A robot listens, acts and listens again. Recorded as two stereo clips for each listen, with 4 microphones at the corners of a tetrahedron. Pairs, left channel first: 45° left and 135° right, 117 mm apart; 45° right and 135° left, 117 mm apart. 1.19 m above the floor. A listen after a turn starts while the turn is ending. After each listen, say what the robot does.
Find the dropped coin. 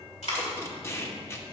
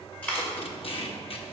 Turn 35° left.
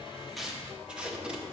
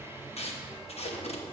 I heard a dropped coin from this way, but can't make it out now.